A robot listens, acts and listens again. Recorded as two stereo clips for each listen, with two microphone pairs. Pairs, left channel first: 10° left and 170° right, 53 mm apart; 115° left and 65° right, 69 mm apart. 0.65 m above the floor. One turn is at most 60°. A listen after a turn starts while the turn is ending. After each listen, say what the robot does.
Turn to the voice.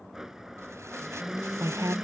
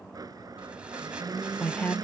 Turn 60° left.
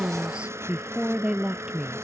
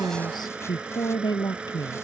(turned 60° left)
Turn 60° left.
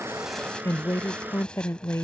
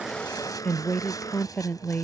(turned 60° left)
Turn 45° left.
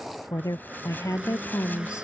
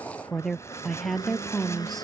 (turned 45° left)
Turn 25° left.
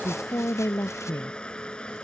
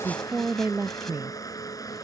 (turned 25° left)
Turn 10° right.
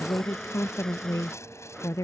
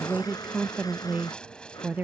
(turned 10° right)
Facing the woman speaking.